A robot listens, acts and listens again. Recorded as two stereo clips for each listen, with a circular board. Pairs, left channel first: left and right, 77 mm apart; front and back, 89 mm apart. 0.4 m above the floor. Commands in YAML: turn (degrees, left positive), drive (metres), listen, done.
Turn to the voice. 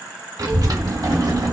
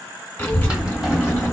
turn: -60
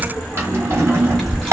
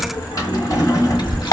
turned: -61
done: "Facing the child speaking, 1 to 2 m away."